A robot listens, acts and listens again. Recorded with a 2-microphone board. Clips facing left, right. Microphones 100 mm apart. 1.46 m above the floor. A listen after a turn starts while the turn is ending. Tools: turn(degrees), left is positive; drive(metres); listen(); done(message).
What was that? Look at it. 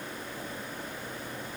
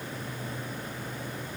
listen()
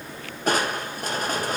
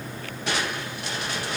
turn(degrees=45)
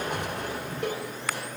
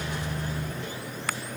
turn(degrees=80)
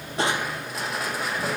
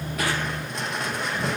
done("Found it: crushing, straight ahead, 1 to 2 m away.")